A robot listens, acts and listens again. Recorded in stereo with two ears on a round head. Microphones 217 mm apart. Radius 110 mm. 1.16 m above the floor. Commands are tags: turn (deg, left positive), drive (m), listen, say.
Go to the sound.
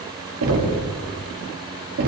<turn deg="-70"/>
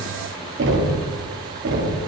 <turn deg="-45"/>
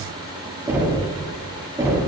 <turn deg="-10"/>
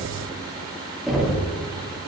<drive m="1.0"/>
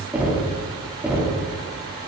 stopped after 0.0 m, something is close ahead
<say>Blocked. The knocking is further on, straight ahead.</say>